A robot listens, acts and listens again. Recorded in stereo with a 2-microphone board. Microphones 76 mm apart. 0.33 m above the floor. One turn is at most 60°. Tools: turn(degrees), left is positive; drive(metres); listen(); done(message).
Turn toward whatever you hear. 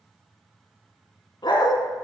turn(degrees=60)
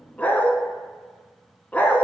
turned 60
turn(degrees=20)
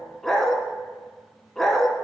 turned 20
done("Found it: a dog barking, straight ahead, under 1 m away.")